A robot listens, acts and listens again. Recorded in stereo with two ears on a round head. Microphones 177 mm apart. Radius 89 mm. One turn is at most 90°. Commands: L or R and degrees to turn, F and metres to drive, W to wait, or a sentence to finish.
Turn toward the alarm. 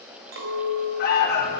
L45
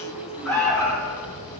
Facing the alarm.